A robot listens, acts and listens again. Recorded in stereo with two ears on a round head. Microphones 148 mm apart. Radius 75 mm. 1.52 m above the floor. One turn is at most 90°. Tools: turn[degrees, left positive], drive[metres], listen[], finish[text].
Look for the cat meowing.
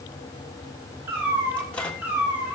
Action: turn[-30]
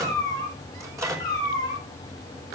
Thought: So it is at 25° left.
Action: turn[25]
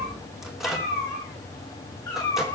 Thought: The cat meowing is now 15° left.
Action: turn[15]
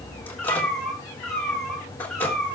Action: finish[Found it: a cat meowing, straight ahead.]